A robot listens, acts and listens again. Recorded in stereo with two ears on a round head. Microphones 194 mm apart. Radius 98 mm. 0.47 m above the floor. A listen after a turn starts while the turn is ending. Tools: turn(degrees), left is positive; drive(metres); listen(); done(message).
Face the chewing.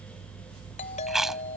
turn(degrees=30)
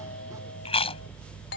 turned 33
turn(degrees=150)
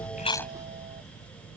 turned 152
listen()
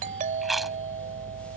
done("Found it: chewing, straight ahead.")